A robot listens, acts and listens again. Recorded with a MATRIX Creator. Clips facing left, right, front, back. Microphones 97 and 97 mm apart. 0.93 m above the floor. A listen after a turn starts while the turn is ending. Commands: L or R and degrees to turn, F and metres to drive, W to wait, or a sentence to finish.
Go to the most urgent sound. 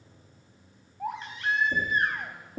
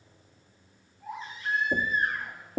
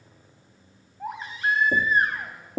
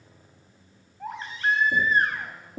L80
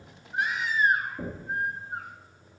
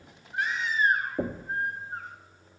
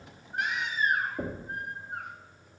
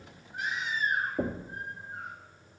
L10
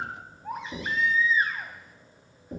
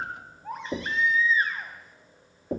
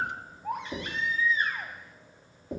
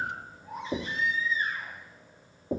F1.0
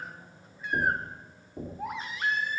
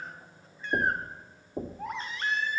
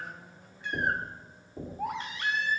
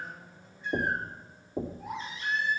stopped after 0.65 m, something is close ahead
L10
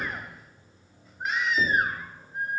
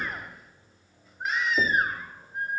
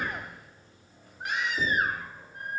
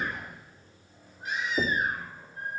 Blocked. The baby crying is further on, straight ahead.